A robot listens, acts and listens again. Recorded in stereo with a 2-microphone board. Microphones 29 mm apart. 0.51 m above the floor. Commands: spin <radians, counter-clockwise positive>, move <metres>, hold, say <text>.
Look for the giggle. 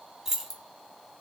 hold
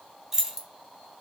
hold
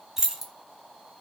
say I can't make out a giggle, only keys jangling.